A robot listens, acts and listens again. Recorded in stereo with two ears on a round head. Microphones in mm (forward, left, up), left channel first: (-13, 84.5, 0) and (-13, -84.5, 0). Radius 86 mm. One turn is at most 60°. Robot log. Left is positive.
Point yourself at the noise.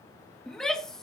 cmd yaw +30
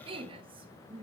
note: So it is at 30° right.
cmd yaw -30
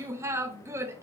note: The shout is now 15° right.
cmd yaw -15
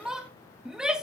end: Found it: a shout, straight ahead, under 1 m away.